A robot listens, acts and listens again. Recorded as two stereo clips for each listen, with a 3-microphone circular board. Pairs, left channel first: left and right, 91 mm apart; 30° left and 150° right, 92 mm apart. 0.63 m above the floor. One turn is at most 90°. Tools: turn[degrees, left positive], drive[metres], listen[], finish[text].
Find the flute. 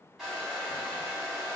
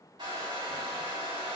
Action: listen[]
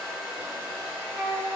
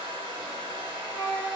Thought: The flute: 30° right.
Action: turn[-30]
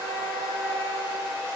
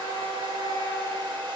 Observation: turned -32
Action: listen[]
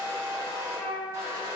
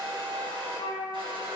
Action: finish[Found it: a flute, straight ahead, 1 to 2 m away.]